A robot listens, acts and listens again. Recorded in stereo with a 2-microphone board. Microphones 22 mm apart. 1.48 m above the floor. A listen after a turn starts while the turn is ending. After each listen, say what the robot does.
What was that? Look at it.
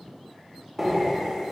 Turn 30° right.
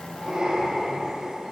Turn 135° right.
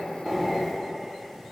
Facing the breathing.